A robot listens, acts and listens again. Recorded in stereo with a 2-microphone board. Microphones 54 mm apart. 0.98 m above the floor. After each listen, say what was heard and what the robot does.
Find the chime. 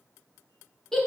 Keep listening.
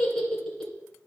Keep listening.
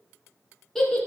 I can't make out a chime, only a giggle.